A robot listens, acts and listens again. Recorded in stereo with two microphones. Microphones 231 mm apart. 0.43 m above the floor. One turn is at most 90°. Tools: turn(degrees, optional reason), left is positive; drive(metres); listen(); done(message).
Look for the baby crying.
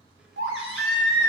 turn(degrees=-60, reason="The baby crying: about 60° right or 120° right.")
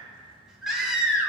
done("Found it: a baby crying, straight ahead.")